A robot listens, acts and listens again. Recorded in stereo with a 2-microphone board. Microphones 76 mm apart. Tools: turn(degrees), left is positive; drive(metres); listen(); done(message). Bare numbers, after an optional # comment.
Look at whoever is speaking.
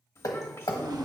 # The child speaking: about 35° left or 145° left.
turn(35)
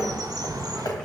listen()
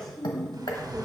# So it is at 10° left.
turn(10)
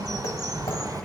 listen()
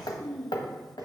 done("Facing the child speaking.")